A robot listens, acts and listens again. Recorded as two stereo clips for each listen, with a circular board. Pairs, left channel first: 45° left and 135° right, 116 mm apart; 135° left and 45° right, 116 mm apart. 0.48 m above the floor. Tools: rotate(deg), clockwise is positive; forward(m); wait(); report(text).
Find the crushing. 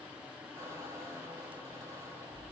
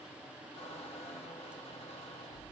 wait()
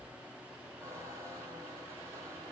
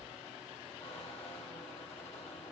wait()
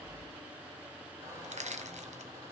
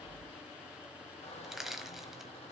rotate(130)
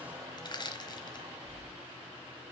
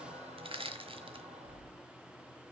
report("Found it: crushing, straight ahead, 1 to 2 m away.")